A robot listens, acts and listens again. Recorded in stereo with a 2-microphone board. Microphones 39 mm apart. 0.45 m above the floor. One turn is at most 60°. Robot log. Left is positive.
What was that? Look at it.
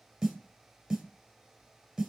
cmd yaw -30
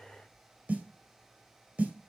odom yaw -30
note: So it is at 145° right.
cmd yaw -60
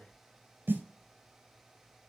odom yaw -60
note: The snare drum is now 85° right.
cmd yaw -60
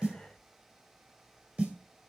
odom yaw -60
note: The snare drum is now 40° right.
cmd yaw -40
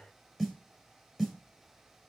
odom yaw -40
end: Facing the snare drum.